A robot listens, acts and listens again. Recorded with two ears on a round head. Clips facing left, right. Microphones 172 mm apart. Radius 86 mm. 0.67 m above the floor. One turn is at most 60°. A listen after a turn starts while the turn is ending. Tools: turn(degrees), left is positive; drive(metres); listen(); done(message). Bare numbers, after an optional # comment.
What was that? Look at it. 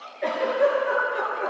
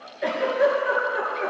turn(-30)
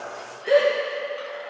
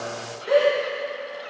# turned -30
# So it is at 25° left.
turn(25)
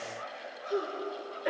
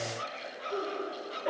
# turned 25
# The giggle is now 25° left.
turn(25)
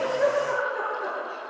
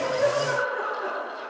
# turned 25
done("Facing the giggle, 2 to 4 m away.")